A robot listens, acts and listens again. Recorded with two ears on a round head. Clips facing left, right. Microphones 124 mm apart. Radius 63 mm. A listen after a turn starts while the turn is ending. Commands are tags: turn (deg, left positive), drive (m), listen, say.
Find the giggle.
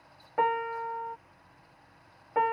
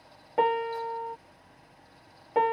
<listen/>
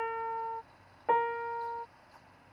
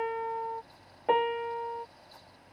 <listen/>
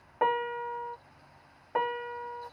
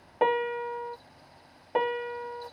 <say>I can't make out a giggle to turn to.</say>